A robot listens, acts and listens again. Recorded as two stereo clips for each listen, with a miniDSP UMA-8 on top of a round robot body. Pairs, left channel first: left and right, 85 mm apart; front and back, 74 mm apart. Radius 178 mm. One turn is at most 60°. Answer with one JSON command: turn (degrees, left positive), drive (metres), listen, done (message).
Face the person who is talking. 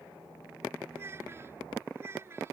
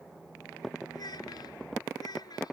{"turn": -30}
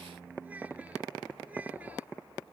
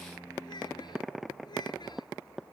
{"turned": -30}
{"turn": -20}
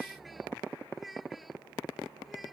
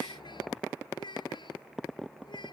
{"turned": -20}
{"done": "Facing the child speaking."}